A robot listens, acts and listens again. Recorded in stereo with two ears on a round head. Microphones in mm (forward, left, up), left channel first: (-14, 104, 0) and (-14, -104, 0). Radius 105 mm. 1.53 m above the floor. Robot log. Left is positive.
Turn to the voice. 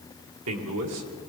cmd yaw -90
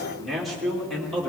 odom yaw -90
end: Found it: a man speaking, straight ahead.